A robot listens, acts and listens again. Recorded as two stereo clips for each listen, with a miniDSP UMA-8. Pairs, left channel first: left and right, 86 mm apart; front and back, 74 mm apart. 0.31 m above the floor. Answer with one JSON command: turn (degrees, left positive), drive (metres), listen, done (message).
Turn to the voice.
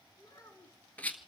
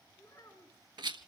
{"turn": 40}
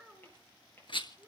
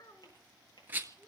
{"done": "Found it: a child speaking, straight ahead, 2 to 4 m away."}